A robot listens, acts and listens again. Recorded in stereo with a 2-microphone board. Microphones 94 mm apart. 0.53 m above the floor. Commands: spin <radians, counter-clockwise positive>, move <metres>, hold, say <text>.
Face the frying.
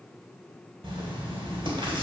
hold
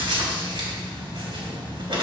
hold
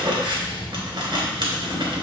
say I can't make out frying, only writing.